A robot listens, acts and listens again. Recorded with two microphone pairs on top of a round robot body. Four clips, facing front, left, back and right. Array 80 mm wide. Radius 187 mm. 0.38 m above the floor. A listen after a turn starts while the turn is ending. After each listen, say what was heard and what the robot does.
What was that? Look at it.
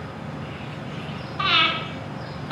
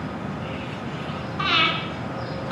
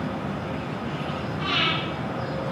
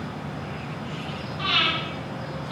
The breathing: 30° left. Turn 30° left.
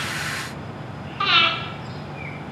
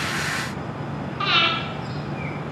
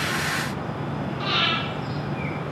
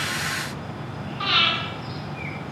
The breathing is now 10° left. Turn 10° left.
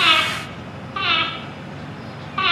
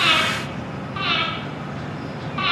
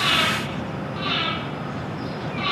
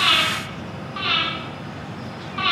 Facing the breathing, over 4 m away.